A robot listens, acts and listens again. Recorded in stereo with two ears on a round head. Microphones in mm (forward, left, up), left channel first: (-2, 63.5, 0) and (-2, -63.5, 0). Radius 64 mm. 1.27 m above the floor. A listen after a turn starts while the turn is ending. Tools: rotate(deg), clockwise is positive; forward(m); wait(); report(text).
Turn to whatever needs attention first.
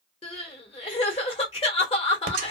rotate(-40)
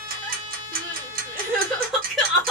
report("Facing the crying.")